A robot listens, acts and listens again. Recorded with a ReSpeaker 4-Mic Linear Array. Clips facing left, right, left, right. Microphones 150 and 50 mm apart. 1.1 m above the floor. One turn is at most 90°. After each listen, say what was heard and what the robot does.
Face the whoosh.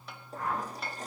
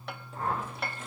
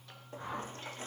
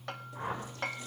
The whoosh: about 30° right or 150° right. Turn 30° right.
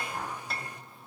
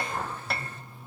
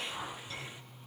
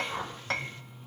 So it is at 120° right. Turn 90° right.
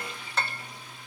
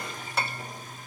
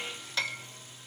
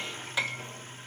Nothing new. It was at 30° right. Turn 30° right.
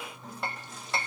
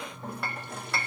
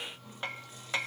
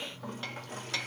Keep listening.
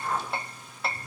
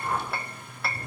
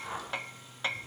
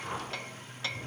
The whoosh is now 15° right. Turn 15° right.
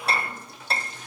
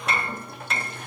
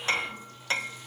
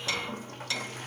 Keep listening.
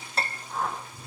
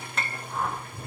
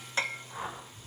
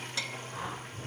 Facing the whoosh, over 4 m away.